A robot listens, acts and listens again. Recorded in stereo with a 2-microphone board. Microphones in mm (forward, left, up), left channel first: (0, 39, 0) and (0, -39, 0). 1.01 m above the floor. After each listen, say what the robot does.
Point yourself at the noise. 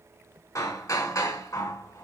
Turn 45° left.
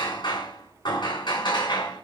Turn 90° left.
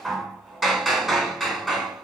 Facing the hammering.